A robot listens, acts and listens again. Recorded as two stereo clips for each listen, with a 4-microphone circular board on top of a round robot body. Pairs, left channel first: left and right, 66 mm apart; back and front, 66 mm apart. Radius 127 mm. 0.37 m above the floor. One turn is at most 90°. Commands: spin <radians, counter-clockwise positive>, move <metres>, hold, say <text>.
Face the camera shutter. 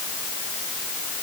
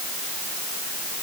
hold
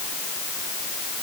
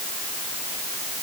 hold
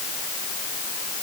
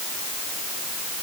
say I can't make out a camera shutter.